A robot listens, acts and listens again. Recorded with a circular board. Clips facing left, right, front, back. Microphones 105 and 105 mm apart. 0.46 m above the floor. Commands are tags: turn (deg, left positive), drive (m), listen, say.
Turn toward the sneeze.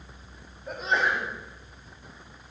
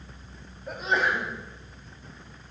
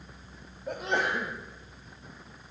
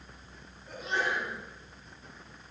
<say>Found it: a sneeze, straight ahead.</say>